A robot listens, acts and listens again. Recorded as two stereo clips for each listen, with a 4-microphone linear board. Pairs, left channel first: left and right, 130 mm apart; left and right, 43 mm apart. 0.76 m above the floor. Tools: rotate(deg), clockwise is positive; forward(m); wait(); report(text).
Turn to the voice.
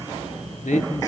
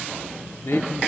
rotate(-70)
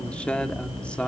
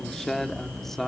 rotate(-10)
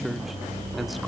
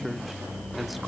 wait()
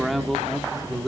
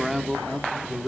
report("Facing the man speaking.")